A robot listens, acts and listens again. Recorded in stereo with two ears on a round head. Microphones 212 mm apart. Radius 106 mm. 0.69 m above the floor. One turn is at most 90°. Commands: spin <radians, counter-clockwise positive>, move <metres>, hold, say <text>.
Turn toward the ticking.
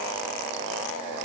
hold
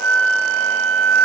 hold
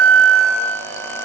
say I can't make out ticking, only a flute.